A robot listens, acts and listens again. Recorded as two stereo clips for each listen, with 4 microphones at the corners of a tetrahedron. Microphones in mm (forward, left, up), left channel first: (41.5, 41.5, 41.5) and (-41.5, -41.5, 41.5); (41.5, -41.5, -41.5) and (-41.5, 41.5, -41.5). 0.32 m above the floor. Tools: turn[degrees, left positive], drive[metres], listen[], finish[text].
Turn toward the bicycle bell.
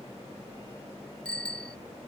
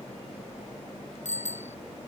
Thought: The bicycle bell: 35° right.
Action: turn[-35]
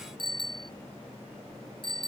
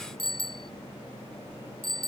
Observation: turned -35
Action: finish[Found it: a bicycle bell, straight ahead.]